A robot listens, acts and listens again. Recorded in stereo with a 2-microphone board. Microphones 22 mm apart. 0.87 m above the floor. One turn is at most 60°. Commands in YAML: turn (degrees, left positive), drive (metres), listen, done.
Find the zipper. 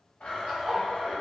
turn: -60
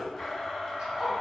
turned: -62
turn: -45
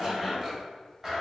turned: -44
done: "Found it: a zipper, straight ahead."